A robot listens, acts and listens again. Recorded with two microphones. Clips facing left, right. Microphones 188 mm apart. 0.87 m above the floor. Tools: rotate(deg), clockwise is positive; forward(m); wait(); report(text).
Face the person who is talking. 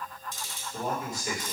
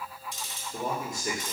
rotate(50)
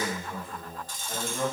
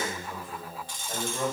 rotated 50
report("Facing the man speaking, 1 to 2 m away.")